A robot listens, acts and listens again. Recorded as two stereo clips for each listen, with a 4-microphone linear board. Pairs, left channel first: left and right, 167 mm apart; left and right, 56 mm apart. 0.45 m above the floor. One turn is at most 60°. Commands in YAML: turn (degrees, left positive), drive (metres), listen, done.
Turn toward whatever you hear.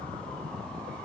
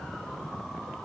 listen: true
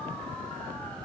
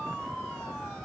listen: true
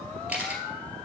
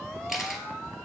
turn: -30
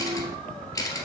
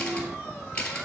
turn: 20
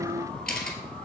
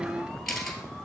done: "Found it: a camera shutter, straight ahead."